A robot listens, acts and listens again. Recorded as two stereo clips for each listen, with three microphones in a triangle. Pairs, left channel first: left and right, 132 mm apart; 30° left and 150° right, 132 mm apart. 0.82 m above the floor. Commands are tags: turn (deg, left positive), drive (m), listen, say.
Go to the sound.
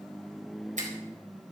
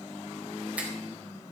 <turn deg="-70"/>
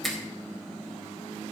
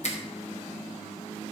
<drive m="1.0"/>
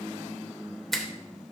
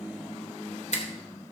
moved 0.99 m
<drive m="1.0"/>
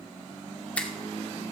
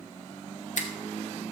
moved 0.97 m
<turn deg="10"/>
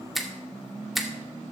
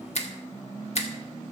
<drive m="1.0"/>
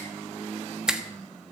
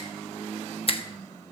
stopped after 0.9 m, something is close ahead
<say>Arrived at the finger snap, straight ahead.</say>